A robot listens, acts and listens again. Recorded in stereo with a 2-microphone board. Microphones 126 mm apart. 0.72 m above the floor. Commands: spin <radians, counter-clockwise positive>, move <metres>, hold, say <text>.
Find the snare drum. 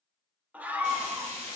hold
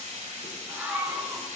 hold
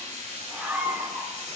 say I can't make out a snare drum to turn to.